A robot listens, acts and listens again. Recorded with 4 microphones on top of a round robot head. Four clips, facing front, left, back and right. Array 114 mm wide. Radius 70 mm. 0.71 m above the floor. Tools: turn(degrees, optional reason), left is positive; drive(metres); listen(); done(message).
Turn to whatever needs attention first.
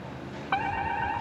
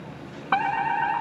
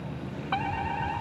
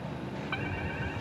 turn(degrees=85, reason="The fire alarm: 85° left.")
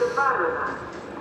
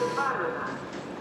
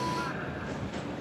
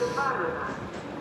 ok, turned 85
done("Facing the fire alarm.")